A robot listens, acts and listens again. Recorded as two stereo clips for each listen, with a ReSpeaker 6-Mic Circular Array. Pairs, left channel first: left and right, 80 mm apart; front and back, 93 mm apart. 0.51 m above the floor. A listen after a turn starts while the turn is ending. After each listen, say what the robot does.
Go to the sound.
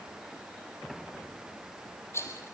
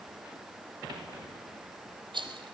Turn 150° left.
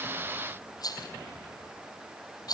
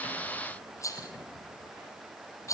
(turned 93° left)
Turn 55° left.
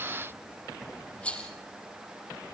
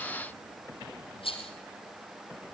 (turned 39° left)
Turn 15° left.
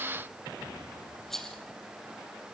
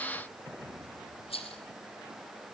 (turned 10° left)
Drive 1.0 m forward.
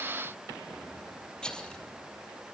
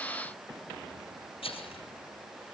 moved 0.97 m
Turn 10° left.
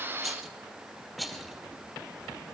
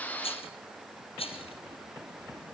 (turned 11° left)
Drive 1.0 m forward.
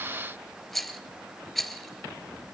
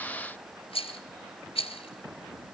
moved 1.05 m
Drive 1.0 m forward.
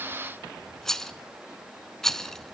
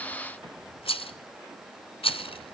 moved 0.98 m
Drive 1.0 m forward.
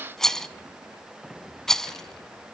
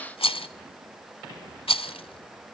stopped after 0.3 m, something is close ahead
Turn 10° left.
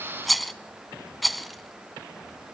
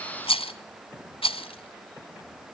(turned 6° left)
I am next to the rattle.